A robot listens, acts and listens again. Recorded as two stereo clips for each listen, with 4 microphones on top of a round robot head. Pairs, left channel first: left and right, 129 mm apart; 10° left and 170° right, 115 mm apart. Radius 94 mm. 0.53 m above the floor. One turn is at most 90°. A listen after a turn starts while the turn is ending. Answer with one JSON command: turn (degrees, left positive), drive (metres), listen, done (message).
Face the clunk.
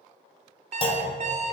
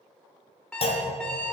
{"turn": 45}
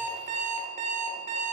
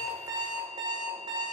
{"done": "Facing where the clunk came from. I can't hear it now."}